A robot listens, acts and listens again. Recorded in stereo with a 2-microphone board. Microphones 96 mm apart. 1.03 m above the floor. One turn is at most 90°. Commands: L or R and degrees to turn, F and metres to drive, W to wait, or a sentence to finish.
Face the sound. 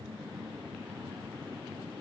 W
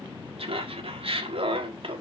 R65
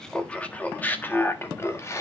L30
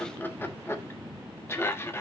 L25
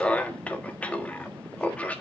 L15
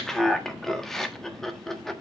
Facing the laughter, 1 to 2 m away.